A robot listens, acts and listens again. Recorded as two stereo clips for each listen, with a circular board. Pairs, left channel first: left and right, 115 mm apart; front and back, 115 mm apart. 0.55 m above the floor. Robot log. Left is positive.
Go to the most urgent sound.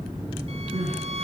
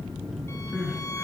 note: The crying: 100° right.
cmd yaw -100
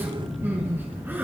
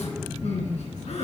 note: The crying is now 15° right.
cmd yaw -15
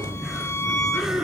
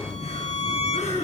cmd fwd 1.0
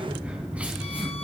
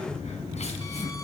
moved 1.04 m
cmd idle
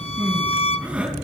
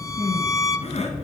note: The crying is now 10° right.
cmd yaw -10
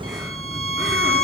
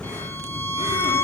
cmd idle
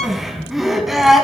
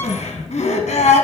cmd fwd 1.0
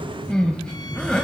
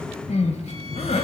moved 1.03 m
note: The crying is now 10° left.
cmd yaw +10
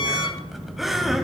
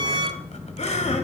cmd fwd 1.0
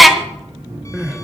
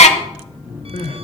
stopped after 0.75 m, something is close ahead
end: Arrived at the crying, straight ahead.